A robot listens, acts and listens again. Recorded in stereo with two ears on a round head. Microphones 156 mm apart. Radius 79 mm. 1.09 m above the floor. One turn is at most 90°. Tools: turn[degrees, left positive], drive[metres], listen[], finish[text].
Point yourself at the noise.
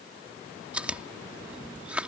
Action: turn[-30]
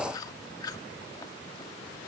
Thought: So it is at 20° left.
Action: turn[20]
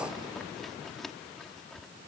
Action: finish[Facing the chewing.]